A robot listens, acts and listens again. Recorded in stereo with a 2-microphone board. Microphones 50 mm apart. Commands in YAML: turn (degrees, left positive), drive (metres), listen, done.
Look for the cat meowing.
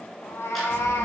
turn: 65
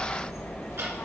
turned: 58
listen: true
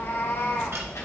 listen: true
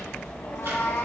done: "I heard a cat meowing, but can't make it out now. It was about 5° left or 60° left."